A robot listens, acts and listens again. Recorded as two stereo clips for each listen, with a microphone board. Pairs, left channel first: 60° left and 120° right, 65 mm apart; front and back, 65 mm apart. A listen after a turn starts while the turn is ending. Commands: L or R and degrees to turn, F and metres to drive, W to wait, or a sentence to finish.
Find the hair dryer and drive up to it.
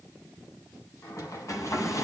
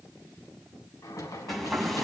L90
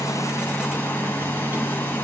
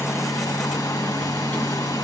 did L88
F1.0
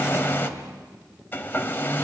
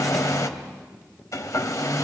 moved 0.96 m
F1.0
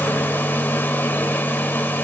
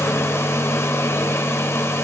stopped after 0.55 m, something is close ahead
L15
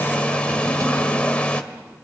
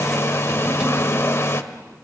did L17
Arrived at the hair dryer, straight ahead.